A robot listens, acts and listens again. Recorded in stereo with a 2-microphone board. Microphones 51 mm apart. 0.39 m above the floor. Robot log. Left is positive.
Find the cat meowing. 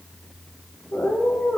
cmd yaw +90
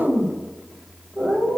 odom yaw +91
note: So it is at 15° right.
cmd yaw -15
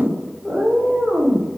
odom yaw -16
end: Facing the cat meowing.